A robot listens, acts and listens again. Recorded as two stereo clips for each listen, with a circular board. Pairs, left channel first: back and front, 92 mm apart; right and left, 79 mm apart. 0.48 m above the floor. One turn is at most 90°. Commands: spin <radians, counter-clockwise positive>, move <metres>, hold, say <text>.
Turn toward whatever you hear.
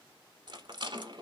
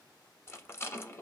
spin -0.52
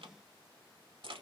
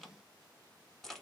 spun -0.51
say Found it: a rattle, straight ahead.